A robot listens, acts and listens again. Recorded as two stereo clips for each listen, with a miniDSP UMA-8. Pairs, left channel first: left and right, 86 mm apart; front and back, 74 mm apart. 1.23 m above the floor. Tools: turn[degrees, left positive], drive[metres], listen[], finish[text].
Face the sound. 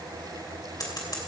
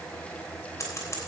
Thought: The scissors: 50° left.
Action: turn[50]
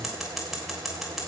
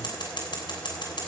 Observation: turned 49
Action: finish[Facing the scissors.]